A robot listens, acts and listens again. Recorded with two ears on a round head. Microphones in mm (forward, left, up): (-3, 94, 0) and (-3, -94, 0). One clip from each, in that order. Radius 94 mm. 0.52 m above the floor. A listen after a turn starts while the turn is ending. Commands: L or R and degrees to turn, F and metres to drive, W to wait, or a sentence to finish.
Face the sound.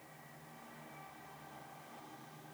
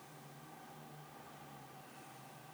W
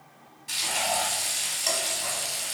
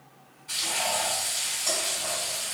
L25
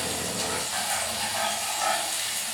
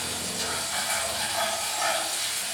L10
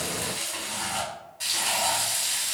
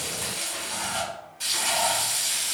Facing the frying, 1 to 2 m away.